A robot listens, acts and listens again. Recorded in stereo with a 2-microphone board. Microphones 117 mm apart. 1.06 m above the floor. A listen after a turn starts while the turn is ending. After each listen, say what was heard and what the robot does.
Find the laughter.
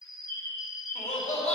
Turn 90° left.
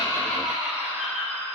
So it is at 15° right. Turn 15° right.
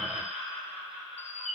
Facing the laughter, over 4 m away.